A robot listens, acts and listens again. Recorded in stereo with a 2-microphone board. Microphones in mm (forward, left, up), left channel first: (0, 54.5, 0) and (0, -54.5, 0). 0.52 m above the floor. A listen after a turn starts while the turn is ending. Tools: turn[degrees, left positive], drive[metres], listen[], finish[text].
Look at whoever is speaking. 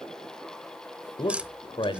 Thought: The man speaking: about 45° left or 135° left.
Action: turn[45]
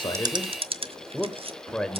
Thought: So it is at 10° left.
Action: turn[10]
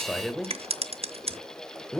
Action: finish[Found it: a man speaking, straight ahead, 1 to 2 m away.]